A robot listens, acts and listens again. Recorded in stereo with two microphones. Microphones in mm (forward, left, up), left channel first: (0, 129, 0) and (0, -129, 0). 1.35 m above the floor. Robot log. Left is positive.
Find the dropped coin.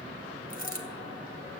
note: The dropped coin: about 35° left or 145° left.
cmd yaw +35
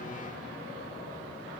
cmd idle
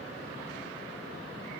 end: I heard a dropped coin, but can't make it out now. It was about straight ahead or 110° left.